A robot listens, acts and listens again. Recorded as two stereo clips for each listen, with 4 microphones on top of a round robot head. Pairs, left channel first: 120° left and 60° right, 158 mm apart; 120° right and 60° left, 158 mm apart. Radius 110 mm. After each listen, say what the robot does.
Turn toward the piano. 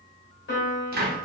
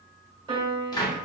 Turn 120° left.
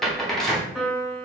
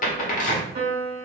Turn 30° left.
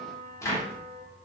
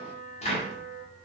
Turn 10° left.
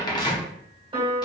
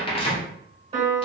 Facing the piano, 1 to 2 m away.